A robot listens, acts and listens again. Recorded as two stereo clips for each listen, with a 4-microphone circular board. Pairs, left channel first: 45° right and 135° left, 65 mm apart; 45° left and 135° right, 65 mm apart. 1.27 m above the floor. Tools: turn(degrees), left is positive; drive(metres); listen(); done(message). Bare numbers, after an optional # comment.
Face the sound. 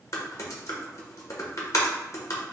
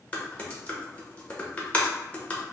# The typing on a keyboard: 20° right.
turn(-20)
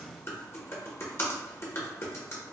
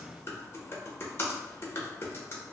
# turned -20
done("Found it: typing on a keyboard, straight ahead.")